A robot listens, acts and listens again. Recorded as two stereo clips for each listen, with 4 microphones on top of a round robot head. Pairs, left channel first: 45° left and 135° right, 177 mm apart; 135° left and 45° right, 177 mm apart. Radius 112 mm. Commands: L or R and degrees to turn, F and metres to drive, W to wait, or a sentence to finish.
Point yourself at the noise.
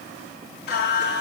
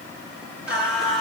L45
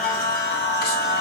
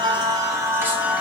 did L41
L40
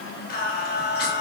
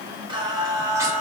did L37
L30
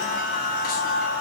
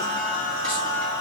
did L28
L20
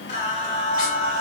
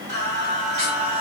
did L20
Facing the singing, 2 to 4 m away.